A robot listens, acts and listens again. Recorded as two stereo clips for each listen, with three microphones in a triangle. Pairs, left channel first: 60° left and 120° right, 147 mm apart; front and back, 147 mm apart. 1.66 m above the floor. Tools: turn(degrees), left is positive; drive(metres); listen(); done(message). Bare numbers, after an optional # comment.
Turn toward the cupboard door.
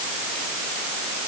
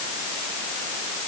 listen()
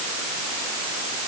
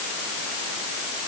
listen()
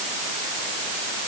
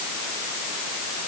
done("I can't make out a cupboard door.")